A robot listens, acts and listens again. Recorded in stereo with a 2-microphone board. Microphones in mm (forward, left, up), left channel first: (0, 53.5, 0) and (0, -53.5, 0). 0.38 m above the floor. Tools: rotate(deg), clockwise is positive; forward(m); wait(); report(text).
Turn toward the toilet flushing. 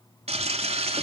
rotate(90)
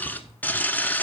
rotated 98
rotate(-15)
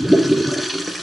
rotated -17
report("Found it: a toilet flushing, straight ahead, under 1 m away.")